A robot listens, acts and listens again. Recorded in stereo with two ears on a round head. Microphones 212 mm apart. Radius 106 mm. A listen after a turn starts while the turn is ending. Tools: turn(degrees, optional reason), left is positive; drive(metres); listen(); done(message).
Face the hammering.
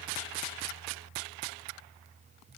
listen()
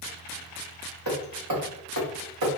turn(degrees=-90)
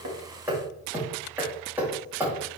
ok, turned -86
turn(degrees=-10, reason="So it is at 10° right.")
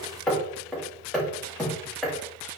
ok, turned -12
done("Facing the hammering.")